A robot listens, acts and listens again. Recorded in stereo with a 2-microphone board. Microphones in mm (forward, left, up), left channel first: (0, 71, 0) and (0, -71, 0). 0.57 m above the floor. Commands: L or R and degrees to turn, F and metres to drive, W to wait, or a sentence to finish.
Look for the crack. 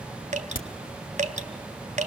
L90
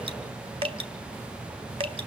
I heard a crack from this way, but can't make it out now.